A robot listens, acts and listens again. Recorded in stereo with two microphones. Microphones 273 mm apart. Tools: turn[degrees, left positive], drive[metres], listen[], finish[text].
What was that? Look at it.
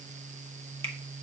Action: listen[]
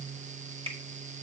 Thought: The finger snap: about 20° right or 160° right.
Action: turn[-20]
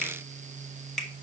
Action: finish[Facing the finger snap.]